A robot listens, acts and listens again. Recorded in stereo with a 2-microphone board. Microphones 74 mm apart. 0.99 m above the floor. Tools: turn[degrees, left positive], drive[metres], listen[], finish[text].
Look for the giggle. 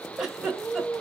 Action: turn[-30]
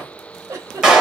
Thought: So it is at 140° right.
Action: turn[-140]
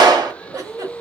Thought: The giggle is now 55° right.
Action: turn[-55]
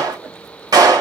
Action: listen[]
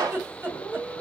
Thought: The giggle is now 30° right.
Action: turn[-30]
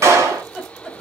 Thought: The giggle is now 10° right.
Action: turn[-10]
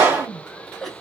Action: finish[Facing the giggle, 1 to 2 m away.]